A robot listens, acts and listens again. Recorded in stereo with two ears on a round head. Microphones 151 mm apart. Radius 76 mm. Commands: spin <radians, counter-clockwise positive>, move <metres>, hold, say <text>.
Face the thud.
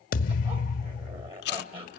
spin 0.96
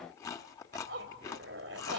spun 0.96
hold
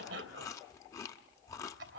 say I heard a thud, but can't make it out now. It was about straight ahead or 70° left.